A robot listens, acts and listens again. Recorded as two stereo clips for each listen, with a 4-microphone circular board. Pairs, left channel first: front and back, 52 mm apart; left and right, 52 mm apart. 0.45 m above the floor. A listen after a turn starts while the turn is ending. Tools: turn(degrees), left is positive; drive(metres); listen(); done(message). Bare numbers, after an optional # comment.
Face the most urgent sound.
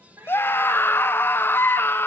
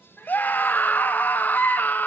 # The scream: 40° left.
turn(40)
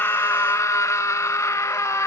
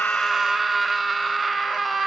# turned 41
done("Facing the scream, 1 to 2 m away.")